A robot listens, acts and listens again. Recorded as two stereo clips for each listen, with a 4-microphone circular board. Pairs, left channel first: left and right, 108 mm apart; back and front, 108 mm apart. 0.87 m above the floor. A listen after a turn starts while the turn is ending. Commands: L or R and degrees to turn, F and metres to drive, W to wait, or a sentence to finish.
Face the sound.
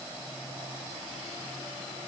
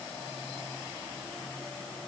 W
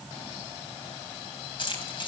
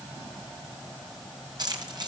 L50
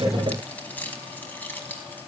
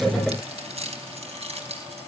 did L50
L15
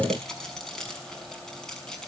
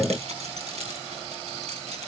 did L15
Facing the keys jangling.